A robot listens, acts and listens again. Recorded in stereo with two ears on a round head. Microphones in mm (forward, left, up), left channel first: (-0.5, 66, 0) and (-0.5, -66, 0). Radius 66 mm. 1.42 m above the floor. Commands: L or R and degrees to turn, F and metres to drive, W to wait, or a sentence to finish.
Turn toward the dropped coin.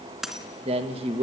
R30
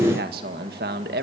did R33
W
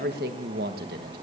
I heard a dropped coin, but can't make it out now. It was about 30° left or 145° right.